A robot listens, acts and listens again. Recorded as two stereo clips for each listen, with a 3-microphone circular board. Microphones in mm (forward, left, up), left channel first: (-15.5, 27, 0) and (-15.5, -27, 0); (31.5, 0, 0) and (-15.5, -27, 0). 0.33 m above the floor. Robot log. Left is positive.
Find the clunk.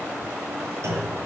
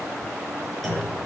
note: The clunk: 60° right.
cmd yaw -60
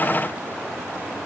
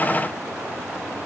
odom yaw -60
end: I heard a clunk from this way, but can't make it out now.